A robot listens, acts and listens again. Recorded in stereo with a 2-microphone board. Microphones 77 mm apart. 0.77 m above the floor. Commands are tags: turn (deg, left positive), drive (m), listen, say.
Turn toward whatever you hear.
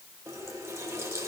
<turn deg="-40"/>
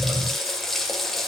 <say>Facing the running tap, 1 to 2 m away.</say>